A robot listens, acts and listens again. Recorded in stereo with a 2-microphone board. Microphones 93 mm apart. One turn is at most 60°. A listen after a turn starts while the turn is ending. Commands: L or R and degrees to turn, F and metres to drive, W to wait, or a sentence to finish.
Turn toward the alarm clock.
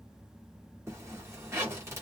W
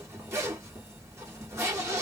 W
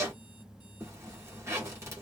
I can't make out an alarm clock, only a zipper.